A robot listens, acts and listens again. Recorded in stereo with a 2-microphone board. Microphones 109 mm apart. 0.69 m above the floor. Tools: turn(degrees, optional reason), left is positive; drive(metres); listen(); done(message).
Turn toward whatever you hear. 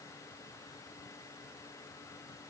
listen()
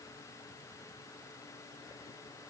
listen()
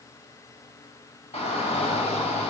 turn(degrees=90)
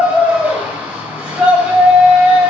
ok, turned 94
turn(degrees=-10, reason="So it is at 10° right.")
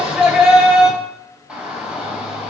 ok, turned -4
done("Found it: a shout, straight ahead, 2 to 4 m away.")